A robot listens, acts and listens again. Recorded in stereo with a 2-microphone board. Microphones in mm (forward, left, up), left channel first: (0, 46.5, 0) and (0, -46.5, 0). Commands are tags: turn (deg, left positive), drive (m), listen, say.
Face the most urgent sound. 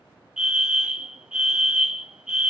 <turn deg="-30"/>
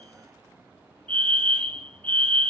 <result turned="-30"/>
<turn deg="20"/>
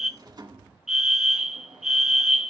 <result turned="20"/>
<say>Found it: a fire alarm, straight ahead.</say>